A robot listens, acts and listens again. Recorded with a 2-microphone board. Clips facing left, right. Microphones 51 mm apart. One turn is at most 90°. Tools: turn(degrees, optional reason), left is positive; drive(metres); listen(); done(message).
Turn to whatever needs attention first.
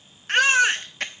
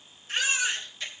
turn(degrees=60, reason="The baby crying: about 60° left or 120° left.")
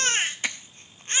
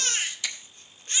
turn(degrees=40, reason="So it is at 40° left.")
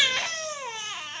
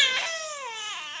done("Facing the baby crying, under 1 m away.")